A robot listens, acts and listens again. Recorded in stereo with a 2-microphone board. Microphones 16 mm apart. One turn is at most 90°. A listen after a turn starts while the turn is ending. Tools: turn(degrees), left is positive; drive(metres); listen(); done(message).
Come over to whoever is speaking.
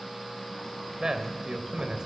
turn(degrees=-60)
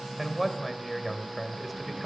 drive(metres=1.0)
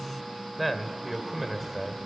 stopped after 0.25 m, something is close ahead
turn(degrees=-10)
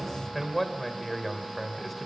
done("Something is in my way. I am facing the man speaking but have not reached it.")